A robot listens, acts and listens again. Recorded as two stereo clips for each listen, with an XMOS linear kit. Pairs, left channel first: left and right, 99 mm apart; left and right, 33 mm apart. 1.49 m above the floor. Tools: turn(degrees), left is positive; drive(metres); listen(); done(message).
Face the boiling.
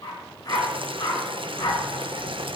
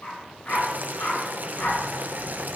turn(degrees=-60)
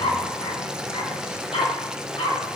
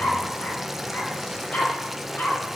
turn(degrees=-10)
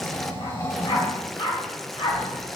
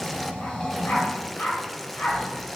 done("Facing the boiling, under 1 m away.")